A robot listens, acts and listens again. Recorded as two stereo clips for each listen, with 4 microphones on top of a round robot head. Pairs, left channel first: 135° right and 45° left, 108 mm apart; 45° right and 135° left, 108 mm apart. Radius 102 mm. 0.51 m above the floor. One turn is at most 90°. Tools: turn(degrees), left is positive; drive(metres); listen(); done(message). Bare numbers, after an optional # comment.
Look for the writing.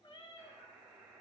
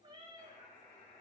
listen()
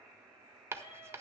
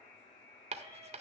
# The writing: 115° left.
turn(90)
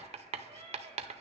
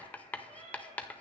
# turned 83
# The writing is now 30° left.
turn(30)
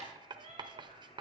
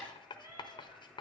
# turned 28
done("Facing the writing.")